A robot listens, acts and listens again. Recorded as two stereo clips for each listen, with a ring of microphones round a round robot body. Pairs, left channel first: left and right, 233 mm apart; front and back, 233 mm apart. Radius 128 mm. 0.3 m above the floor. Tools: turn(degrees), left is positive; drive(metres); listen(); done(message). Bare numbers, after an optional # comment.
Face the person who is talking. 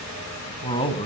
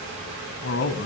# The man speaking: 25° left.
turn(25)
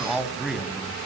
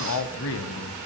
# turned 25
done("Found it: a man speaking, straight ahead.")